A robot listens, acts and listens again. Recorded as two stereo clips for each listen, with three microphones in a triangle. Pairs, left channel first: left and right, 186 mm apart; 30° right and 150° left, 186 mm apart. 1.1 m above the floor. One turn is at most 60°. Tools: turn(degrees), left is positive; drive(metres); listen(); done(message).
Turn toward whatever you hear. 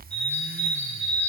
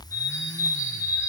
turn(degrees=40)
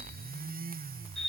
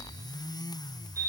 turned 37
done("Found it: a bird, straight ahead.")